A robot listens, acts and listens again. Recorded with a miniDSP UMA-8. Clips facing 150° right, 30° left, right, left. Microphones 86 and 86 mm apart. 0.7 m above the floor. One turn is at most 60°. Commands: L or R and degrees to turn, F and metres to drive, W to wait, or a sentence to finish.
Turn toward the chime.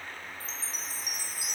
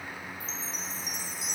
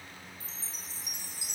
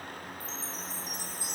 R60
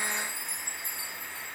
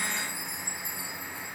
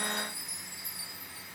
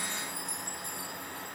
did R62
Found it: a chime, straight ahead.